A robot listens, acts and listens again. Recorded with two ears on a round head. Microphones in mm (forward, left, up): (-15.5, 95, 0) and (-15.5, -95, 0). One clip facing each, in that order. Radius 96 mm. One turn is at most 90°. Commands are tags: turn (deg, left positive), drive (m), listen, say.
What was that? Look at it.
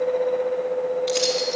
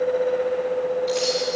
<turn deg="50"/>
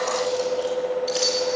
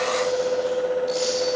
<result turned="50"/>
<turn deg="70"/>
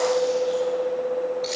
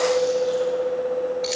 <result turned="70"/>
<say>Found it: keys jangling, straight ahead, over 4 m away.</say>